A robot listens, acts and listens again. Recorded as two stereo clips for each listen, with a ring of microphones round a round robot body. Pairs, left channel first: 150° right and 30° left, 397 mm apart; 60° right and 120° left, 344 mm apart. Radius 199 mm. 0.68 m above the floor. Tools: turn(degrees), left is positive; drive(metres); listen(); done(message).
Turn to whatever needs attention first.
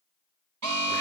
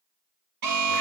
turn(degrees=85)
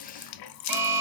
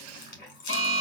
done("Found it: an alarm, straight ahead.")